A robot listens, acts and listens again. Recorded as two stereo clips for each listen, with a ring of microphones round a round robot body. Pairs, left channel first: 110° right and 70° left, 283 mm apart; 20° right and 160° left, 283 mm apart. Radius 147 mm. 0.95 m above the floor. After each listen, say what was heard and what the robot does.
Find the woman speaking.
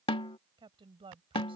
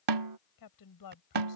Found it: a woman speaking, straight ahead.